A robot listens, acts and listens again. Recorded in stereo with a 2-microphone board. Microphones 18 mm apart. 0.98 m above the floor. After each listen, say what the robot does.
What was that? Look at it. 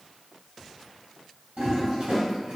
Turn 60° right.
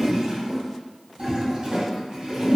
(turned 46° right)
Turn 60° right.
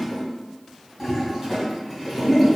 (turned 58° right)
Facing the toilet flushing.